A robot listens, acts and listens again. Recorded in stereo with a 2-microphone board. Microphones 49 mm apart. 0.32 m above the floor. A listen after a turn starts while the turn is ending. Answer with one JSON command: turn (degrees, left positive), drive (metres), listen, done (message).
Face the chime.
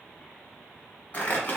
{"listen": true}
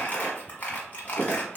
{"listen": true}
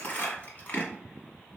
{"done": "I can't make out a chime, only crumpling."}